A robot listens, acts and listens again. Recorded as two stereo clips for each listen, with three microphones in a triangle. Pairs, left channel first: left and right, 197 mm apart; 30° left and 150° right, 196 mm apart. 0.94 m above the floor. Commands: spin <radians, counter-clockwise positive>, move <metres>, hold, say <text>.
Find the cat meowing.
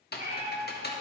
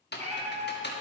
spin -1.75
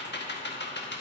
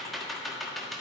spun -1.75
hold
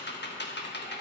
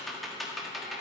hold
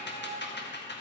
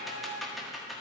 spin -1.05
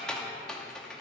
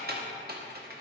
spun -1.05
hold
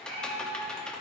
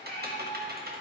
spin -0.35
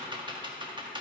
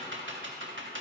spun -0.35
hold
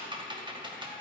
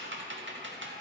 hold
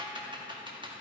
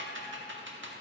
say I heard a cat meowing from this way, but can't make it out now.